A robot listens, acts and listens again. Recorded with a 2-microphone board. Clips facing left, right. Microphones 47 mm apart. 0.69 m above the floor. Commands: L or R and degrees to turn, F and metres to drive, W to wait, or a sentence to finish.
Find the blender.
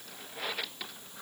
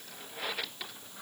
W
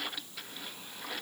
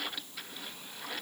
W
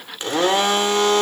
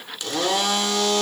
L35
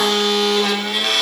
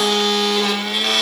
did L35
Facing the blender, 1 to 2 m away.